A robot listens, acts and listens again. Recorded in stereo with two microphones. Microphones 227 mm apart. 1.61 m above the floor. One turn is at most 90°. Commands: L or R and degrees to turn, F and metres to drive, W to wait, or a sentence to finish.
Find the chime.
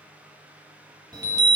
R20
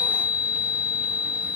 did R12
Found it: a chime, straight ahead.